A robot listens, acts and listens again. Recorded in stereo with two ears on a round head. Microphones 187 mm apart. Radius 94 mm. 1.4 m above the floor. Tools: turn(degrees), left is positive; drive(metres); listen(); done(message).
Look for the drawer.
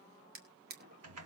turn(degrees=-50)
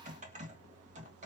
listen()
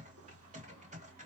listen()
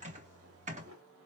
done("I heard a drawer, but can't make it out now. It was about straight ahead or 80° right.")